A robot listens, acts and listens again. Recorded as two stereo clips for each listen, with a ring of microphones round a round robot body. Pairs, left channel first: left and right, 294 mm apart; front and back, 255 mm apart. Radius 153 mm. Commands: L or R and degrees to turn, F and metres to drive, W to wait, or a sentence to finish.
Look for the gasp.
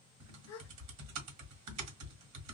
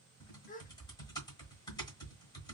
L60
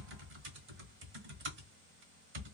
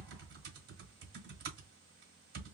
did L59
Facing where the gasp came from. I can't hear it now.